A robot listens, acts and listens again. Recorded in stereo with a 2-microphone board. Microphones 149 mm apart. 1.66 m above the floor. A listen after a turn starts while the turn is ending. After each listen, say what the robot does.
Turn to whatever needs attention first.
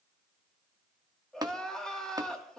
Turn 30° left.
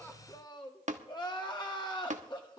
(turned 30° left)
Turn 145° left.
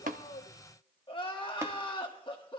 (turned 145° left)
Turn 40° left.
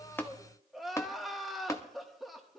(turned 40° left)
Facing the crying.